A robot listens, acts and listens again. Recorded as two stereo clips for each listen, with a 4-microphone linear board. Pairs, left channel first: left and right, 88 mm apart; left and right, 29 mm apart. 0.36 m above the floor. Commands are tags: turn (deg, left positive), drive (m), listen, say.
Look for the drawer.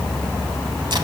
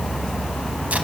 <listen/>
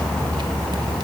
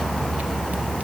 <listen/>
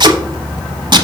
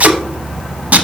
<say>I can't make out a drawer to turn to.</say>